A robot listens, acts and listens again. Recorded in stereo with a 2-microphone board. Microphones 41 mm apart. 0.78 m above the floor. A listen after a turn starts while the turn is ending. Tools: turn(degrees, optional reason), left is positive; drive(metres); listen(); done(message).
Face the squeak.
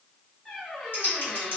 turn(degrees=30)
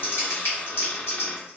turn(degrees=140, reason="So it is at 140° left.")
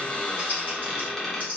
done("Facing the squeak.")